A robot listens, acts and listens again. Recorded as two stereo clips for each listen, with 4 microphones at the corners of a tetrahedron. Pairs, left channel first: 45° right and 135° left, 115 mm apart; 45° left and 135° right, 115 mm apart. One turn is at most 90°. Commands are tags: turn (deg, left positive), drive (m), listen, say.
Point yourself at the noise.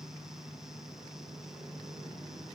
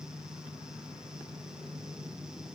<listen/>
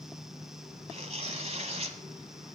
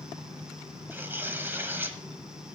<turn deg="90"/>
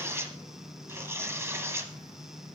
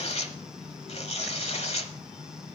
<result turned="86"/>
<turn deg="65"/>
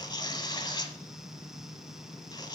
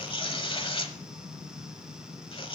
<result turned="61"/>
<say>Found it: tearing paper, straight ahead, 1 to 2 m away.</say>